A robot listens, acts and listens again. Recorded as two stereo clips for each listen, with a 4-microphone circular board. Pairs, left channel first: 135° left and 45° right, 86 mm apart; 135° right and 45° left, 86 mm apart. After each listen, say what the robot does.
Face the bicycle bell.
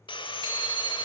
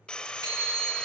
Found it: a bicycle bell, straight ahead.